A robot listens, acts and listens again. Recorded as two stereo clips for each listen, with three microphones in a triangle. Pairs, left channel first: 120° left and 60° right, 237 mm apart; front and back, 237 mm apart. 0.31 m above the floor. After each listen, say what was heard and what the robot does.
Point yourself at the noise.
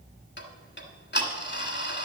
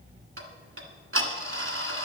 The ticking: 160° left. Turn 160° left.
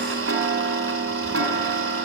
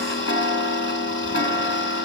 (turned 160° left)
The ticking is now 40° right. Turn 40° right.
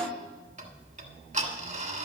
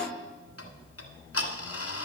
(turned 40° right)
Found it: ticking, straight ahead, 1 to 2 m away.